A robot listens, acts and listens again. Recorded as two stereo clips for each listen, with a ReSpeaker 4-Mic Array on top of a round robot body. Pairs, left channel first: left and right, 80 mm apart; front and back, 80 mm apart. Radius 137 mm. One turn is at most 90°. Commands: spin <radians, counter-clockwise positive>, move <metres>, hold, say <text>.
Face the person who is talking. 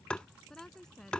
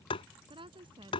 spin 1.57
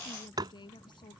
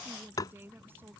spin 1.57
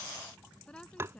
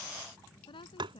spin 0.17
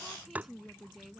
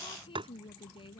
say Facing the woman speaking.